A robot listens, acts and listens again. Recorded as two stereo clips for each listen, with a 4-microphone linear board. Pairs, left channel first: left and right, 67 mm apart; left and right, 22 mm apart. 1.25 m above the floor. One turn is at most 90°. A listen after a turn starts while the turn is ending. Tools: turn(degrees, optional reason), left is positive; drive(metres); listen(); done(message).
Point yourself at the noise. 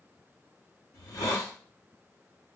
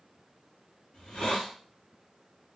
turn(degrees=70, reason="The hiss: about 70° left or 110° left.")
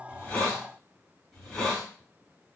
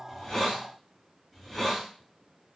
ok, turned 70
done("Found it: a hiss, straight ahead, 2 to 4 m away.")